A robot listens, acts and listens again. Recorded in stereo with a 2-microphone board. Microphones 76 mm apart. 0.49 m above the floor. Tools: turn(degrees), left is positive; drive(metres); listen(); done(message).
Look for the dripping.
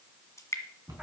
turn(degrees=40)
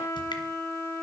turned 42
listen()
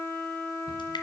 listen()
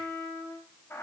done("I heard dripping, but can't make it out now. It was about straight ahead or 95° left.")